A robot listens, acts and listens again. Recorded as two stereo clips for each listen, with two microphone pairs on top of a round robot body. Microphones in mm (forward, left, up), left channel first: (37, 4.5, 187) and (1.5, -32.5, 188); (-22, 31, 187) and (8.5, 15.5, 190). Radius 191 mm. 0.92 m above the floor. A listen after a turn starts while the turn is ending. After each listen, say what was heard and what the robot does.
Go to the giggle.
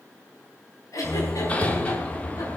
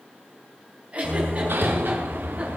The giggle: 25° left. Turn 25° left.
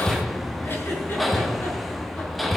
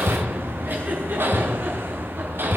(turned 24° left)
Keep listening.
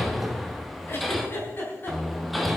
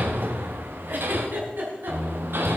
Drive 1.0 m forward.
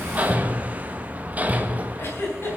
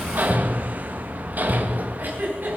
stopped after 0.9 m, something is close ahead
Something is in my way. I am facing the giggle but have not reached it.